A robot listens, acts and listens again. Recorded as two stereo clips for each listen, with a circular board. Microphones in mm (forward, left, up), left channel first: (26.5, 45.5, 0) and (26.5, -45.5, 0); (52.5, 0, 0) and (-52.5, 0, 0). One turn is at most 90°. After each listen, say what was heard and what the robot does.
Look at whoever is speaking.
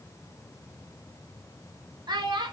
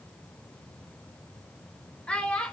The child speaking: 80° right. Turn 80° right.
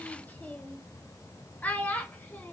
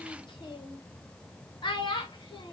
The child speaking is now 20° left. Turn 20° left.
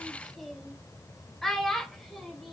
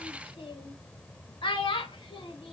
Facing the child speaking.